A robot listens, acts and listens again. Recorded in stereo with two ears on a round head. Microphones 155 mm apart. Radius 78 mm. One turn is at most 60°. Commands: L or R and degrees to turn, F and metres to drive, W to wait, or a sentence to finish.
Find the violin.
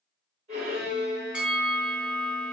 R35
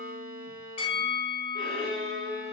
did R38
Found it: a violin, straight ahead.